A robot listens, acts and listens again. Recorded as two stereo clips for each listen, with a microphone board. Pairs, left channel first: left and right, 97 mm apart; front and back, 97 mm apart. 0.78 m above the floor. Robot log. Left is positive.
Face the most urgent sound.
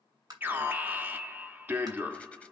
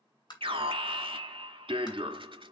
note: The alarm: 160° right.
cmd yaw -160
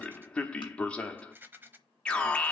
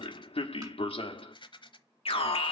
note: The alarm is now 10° left.
cmd yaw +10
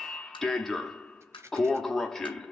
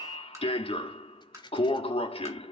end: Facing the alarm, 1 to 2 m away.